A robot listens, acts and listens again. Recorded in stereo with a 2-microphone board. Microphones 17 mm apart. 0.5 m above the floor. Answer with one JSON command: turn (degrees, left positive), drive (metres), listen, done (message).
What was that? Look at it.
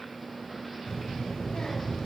{"turn": 65}
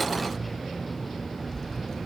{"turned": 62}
{"turn": 40}
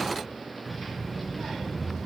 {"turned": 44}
{"turn": 10}
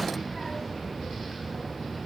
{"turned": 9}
{"done": "Found it: a child speaking, straight ahead, 2 to 4 m away."}